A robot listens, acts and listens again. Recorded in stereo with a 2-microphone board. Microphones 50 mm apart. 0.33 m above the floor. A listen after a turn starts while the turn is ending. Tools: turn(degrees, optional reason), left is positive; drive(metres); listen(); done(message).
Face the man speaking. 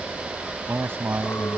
turn(degrees=-55, reason="The man speaking: about 55° right or 125° right.")
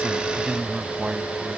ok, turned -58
turn(degrees=-20, reason="So it is at 20° right.")
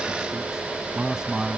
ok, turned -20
turn(degrees=-15, reason="The man speaking is now 15° right.")
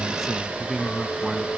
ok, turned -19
done("Found it: a man speaking, straight ahead.")